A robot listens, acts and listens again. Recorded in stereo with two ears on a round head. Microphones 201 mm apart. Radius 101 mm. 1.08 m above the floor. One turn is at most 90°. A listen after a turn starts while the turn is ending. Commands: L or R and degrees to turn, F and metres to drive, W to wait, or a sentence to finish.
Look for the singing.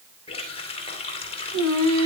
R70
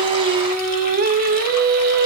R45
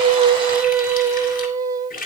R20
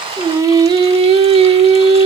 R25
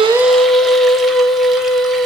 Facing the singing.